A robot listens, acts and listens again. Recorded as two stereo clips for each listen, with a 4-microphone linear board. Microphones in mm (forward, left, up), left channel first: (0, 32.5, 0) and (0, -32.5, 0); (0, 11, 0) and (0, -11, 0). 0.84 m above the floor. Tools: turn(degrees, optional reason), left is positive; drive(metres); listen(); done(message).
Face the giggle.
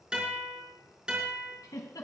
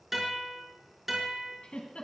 turn(degrees=90)
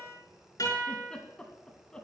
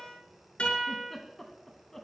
turn(degrees=15, reason="So it is at 15° left.")
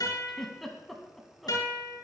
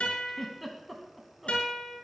done("Found it: a giggle, straight ahead, 2 to 4 m away.")